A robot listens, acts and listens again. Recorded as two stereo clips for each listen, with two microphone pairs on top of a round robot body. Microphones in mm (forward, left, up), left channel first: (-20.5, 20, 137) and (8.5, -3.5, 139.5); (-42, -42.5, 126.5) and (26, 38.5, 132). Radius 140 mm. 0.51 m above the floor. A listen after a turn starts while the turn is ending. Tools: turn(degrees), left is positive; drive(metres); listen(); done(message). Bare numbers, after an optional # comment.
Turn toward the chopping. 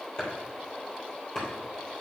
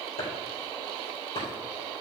# The chopping: 160° right.
turn(-160)
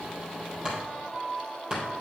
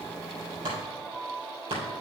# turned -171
# The chopping is now 10° left.
turn(10)
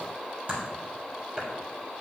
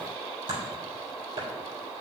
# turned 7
done("Found it: chopping, straight ahead, 2 to 4 m away.")